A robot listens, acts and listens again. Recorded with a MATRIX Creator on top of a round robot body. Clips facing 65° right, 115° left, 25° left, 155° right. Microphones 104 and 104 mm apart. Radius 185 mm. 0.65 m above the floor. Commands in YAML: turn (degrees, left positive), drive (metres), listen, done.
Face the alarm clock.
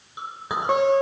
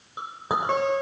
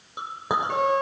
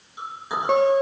listen: true
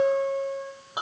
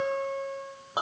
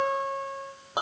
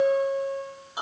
listen: true
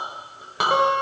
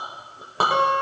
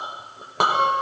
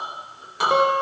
done: "I can't make out an alarm clock, only a guitar and a clink."